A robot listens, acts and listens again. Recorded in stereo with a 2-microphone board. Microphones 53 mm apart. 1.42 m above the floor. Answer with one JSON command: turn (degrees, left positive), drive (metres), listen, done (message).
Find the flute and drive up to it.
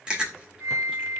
{"turn": -60}
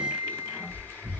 {"turn": -25}
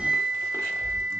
{"drive": 1.0}
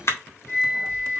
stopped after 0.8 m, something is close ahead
{"done": "Arrived at the flute, straight ahead."}